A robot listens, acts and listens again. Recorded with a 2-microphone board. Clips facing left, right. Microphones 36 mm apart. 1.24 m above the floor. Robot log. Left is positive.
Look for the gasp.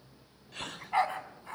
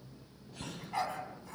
note: The gasp: about 70° left or 110° left.
cmd yaw +70
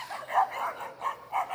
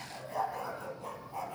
cmd idle
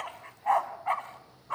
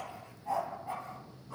end: I heard a gasp, but can't make it out now. It was about straight ahead or 40° left.